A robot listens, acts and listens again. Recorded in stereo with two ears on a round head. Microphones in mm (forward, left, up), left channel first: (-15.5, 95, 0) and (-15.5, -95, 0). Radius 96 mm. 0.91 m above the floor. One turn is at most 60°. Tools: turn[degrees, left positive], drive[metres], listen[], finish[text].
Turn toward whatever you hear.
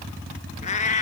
Thought: The cat meowing: about 35° left or 145° left.
Action: turn[35]
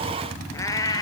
Thought: So it is at 15° left.
Action: turn[15]
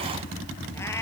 Action: listen[]
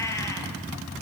Thought: The cat meowing is now 15° left.
Action: turn[15]
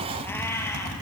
Thought: The cat meowing is now 10° left.
Action: turn[10]
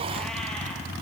Action: listen[]
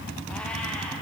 Action: listen[]
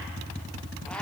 Action: finish[Facing where the cat meowing came from. I can't hear it now.]